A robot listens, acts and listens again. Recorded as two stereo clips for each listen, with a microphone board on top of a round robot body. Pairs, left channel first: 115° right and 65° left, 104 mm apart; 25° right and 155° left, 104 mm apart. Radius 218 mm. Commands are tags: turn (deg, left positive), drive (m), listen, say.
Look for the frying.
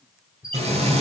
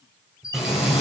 <turn deg="70"/>
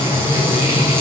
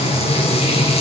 <say>Found it: frying, straight ahead.</say>